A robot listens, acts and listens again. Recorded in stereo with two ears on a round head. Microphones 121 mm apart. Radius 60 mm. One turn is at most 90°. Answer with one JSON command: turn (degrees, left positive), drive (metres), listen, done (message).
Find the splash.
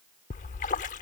{"turn": 60}
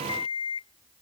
{"listen": true}
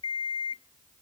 {"done": "I heard a splash, but can't make it out now. It was about straight ahead or 60° left."}